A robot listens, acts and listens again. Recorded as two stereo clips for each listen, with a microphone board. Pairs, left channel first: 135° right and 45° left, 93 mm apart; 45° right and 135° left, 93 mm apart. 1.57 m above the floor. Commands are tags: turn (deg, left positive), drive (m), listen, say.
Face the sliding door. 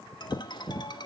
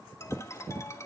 <listen/>
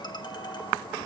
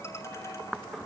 <listen/>
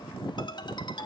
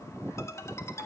<say>I can't make out a sliding door, only a ringtone.</say>